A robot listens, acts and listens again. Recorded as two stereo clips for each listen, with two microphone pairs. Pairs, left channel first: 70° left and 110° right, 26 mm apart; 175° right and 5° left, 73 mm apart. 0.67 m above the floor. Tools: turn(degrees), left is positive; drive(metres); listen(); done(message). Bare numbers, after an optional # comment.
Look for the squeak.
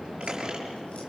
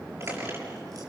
# The squeak: 45° right.
turn(-45)
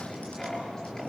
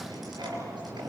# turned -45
done("Facing the squeak.")